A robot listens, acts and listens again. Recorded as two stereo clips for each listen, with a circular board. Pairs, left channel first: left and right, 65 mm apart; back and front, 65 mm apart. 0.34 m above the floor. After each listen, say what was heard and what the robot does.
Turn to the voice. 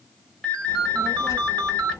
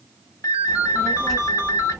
The child speaking: 95° left. Turn 95° left.
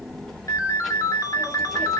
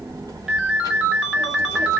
Facing the child speaking.